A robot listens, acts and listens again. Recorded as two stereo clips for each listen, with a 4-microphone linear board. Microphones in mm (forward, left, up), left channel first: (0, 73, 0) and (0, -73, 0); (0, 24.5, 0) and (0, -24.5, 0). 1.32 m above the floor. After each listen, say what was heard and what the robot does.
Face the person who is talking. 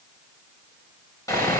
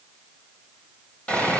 Keep listening.
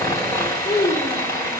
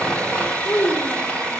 Turn 90° left.
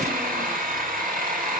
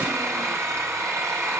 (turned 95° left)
Keep listening.
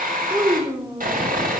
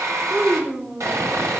The child speaking is now 15° right. Turn 15° right.
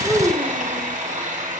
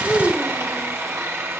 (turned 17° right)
Facing the child speaking.